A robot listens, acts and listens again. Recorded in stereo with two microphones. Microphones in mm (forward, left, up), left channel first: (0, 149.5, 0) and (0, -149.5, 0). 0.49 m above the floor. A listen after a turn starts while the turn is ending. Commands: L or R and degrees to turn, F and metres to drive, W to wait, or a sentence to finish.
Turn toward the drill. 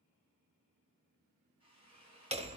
L55
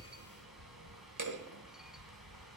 W
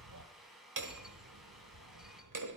Found it: a drill, straight ahead.